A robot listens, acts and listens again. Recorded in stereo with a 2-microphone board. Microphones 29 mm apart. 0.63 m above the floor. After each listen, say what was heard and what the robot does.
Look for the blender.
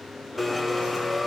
Turn 30° left.
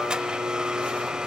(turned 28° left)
So it is at 25° right. Turn 25° right.
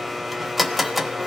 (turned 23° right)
Facing the blender.